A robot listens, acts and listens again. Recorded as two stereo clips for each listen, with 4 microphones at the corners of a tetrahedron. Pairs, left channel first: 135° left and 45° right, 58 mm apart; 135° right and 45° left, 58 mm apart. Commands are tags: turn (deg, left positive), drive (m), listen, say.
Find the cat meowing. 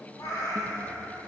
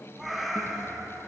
<turn deg="135"/>
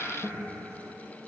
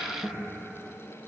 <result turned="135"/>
<listen/>
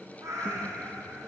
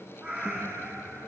<turn deg="-15"/>
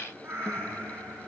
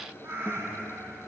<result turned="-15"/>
<say>Facing the cat meowing, over 4 m away.</say>